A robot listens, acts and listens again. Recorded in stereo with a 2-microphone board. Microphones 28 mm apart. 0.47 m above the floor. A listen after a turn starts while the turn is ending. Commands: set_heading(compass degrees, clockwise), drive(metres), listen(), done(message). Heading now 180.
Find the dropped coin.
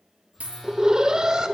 set_heading(250)
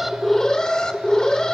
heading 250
listen()
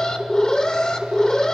done("I heard a dropped coin, but can't make it out now. It was about straight ahead or 40° right.")